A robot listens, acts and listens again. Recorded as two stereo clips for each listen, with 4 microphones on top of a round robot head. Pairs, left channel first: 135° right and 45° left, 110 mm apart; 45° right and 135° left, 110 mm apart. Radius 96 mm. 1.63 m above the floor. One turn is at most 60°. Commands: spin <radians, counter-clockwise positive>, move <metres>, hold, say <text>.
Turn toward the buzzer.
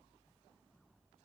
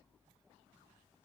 hold
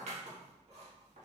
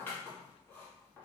hold
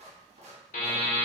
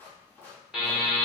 spin -1.05
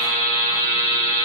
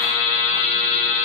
spin -1.05
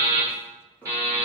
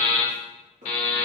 spin -0.35
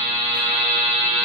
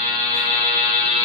say Found it: a buzzer, straight ahead.